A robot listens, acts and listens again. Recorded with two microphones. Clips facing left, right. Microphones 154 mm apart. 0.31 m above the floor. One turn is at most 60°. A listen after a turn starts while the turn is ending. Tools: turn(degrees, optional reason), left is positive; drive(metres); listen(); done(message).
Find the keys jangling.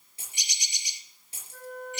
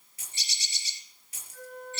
turn(degrees=30, reason="The keys jangling: about 30° left or 150° left.")
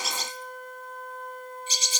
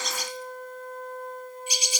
listen()
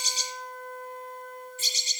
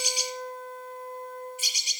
listen()
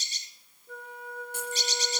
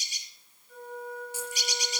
done("I heard keys jangling, but can't make it out now. It was about straight ahead or 120° left.")